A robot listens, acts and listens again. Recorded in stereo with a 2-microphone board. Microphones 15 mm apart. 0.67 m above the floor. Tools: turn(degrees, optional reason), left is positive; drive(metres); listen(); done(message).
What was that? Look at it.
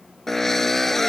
turn(degrees=25, reason="The drill: about 25° left or 155° left.")
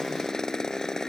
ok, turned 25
turn(degrees=135, reason="So it is at 135° left.")
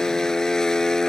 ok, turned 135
turn(degrees=45, reason="The drill is now 45° left.")
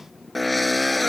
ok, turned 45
done("Facing the drill.")